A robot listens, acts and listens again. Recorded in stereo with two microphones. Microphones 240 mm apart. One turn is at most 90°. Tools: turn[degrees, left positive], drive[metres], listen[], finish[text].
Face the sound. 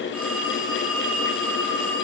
Action: turn[-30]
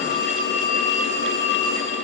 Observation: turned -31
Thought: So it is at 25° left.
Action: turn[25]
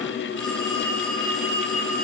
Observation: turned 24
Action: finish[Found it: a phone ringing, straight ahead.]